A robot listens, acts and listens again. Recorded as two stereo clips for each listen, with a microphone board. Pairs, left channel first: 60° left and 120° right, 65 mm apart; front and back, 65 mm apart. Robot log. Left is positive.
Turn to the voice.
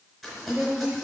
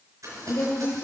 note: The woman speaking: 45° right.
cmd yaw -45
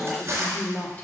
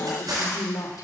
end: Found it: a woman speaking, straight ahead, 1 to 2 m away.